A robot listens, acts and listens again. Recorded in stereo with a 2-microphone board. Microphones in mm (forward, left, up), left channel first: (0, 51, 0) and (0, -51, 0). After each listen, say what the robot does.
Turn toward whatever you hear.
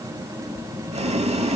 Turn 90° right.
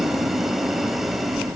Found it: boiling, straight ahead, under 1 m away.